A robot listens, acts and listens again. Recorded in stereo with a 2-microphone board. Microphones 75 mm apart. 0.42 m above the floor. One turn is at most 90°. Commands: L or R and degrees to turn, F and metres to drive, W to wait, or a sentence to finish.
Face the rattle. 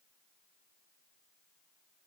W
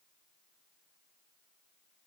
W
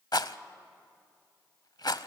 L70
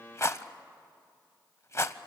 L40
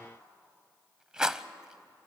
R10
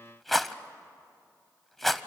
Facing the rattle.